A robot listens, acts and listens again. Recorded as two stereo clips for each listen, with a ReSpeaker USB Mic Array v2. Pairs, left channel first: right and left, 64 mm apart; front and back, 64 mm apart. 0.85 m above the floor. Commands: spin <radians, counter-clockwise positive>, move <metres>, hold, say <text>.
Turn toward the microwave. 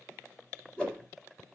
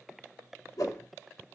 hold
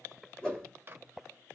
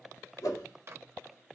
spin 2.44
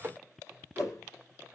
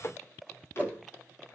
spin 0.70
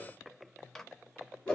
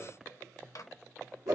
say Found it: a microwave, straight ahead.